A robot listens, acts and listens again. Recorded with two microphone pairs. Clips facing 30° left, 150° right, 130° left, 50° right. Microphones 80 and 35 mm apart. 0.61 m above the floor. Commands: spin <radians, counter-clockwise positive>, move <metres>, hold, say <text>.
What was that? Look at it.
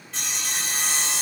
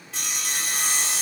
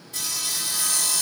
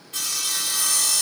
spin -1.05
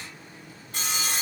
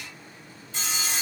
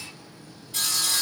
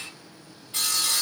say Facing the sawing, 2 to 4 m away.